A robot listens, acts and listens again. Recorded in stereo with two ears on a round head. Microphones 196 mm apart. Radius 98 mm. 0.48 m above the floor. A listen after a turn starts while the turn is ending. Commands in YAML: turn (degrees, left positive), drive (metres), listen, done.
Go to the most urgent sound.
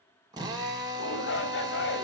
turn: 55
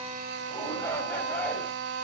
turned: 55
turn: 10
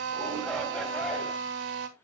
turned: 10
drive: 1.0
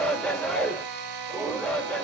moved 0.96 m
drive: 1.0
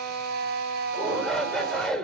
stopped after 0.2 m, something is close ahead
done: "I am next to the shout."